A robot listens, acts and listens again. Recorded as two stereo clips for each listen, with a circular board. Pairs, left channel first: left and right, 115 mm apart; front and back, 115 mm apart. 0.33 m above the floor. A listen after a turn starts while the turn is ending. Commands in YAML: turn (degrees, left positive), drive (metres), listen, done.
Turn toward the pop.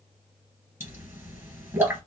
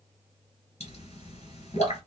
turn: -20
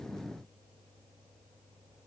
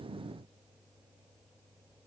done: "I heard a pop from this way, but can't make it out now."